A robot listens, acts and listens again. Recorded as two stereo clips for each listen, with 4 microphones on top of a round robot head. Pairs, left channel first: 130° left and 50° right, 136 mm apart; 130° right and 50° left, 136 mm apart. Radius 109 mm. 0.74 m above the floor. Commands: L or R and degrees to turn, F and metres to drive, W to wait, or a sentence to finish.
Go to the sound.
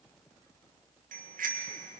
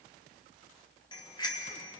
R70
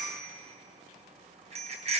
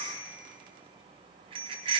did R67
F1.0
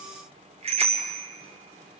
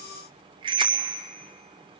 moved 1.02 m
F1.0
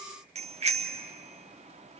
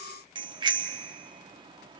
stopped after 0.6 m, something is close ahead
R10
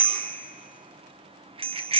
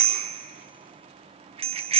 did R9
Arrived at the bicycle bell, straight ahead.